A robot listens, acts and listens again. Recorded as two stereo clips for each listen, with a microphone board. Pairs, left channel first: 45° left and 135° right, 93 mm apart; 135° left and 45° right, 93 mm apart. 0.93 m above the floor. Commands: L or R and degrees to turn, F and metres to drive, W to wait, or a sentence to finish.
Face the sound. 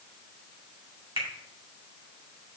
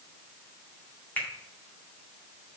R155
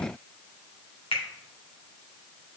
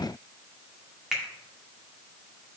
L40
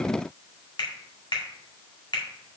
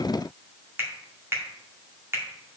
L15
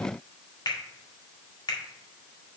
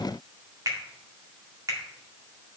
Facing the finger snap.